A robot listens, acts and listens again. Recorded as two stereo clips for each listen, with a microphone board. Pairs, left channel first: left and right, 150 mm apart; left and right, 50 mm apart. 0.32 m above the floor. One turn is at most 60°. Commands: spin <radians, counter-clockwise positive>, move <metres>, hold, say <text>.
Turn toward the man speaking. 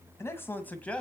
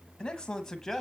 spin 0.52
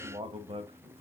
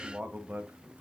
spin -0.79
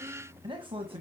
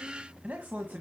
spin -0.70
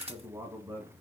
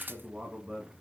spin -0.35
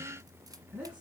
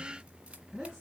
spin -0.17
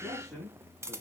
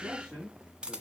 say Found it: a man speaking, straight ahead.